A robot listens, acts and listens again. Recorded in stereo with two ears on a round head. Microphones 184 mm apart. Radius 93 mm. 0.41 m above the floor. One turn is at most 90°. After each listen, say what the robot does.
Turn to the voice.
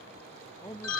Turn 15° left.
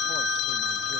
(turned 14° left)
Keep listening.
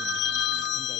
Keep listening.
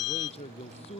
Turn 90° left.
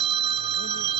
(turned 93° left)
Turn 55° left.
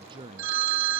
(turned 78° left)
Turn 25° right.
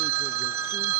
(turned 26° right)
Keep listening.
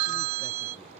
Keep listening.
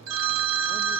Facing where the man speaking came from. I can't hear it now.